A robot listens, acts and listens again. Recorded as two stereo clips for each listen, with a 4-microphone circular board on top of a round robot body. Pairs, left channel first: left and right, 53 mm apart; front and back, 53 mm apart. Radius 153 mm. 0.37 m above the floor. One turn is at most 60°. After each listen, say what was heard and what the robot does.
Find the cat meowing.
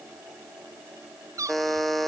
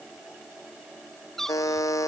The cat meowing: 85° right. Turn 60° right.
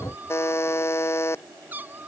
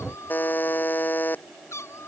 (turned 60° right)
The cat meowing is now 35° right. Turn 35° right.
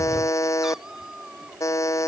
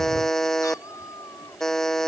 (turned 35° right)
The cat meowing is now 10° right. Turn 10° right.
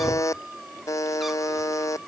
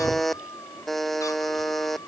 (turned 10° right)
Found it: a cat meowing, straight ahead.